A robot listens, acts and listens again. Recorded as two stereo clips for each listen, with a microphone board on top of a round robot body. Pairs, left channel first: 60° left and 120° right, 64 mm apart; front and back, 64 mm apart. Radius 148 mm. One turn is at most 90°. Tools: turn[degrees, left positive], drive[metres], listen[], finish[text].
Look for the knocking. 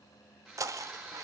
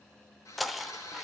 Thought: The knocking: 90° right.
Action: turn[-90]
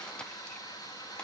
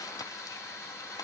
Action: listen[]
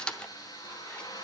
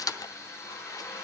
Thought: The knocking is now 15° right.
Action: turn[-15]
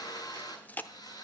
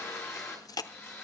Action: finish[Found it: knocking, straight ahead, 1 to 2 m away.]